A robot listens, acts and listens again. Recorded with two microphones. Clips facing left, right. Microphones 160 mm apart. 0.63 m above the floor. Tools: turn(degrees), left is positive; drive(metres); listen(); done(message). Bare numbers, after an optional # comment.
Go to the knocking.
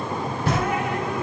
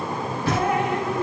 # The knocking: about 75° left or 105° left.
turn(75)
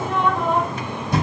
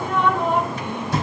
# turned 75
# So it is at 20° left.
turn(20)
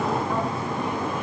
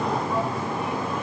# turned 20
listen()
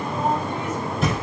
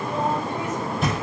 drive(1.0)
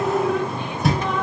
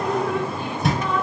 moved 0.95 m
drive(1.0)
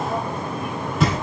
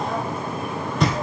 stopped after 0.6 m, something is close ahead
done("Arrived at the knocking, straight ahead.")